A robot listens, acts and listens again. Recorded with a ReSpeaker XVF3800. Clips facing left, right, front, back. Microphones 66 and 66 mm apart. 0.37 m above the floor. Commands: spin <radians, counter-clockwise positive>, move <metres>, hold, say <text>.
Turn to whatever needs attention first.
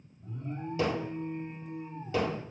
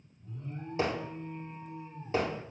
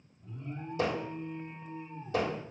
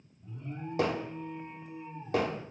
spin 1.75
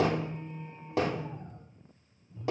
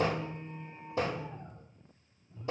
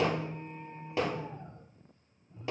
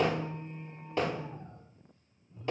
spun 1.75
spin -0.35
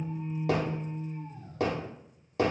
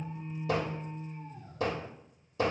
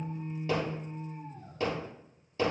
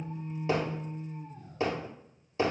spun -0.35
say Found it: an alarm, straight ahead, 2 to 4 m away.